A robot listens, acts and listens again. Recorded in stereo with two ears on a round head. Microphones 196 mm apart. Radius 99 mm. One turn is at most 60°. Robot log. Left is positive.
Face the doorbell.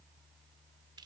cmd idle
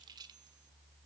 cmd idle
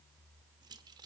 end: I can't make out a doorbell, only keys jangling.